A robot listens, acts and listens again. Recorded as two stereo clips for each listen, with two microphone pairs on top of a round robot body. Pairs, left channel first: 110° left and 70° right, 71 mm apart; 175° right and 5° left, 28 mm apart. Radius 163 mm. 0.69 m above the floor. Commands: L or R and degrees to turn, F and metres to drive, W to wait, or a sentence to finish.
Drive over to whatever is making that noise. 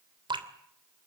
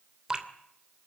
R65
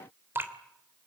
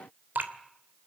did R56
R10
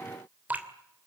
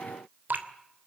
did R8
F1.0
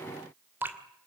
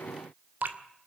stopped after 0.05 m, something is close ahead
Blocked. The dripping is further on, straight ahead.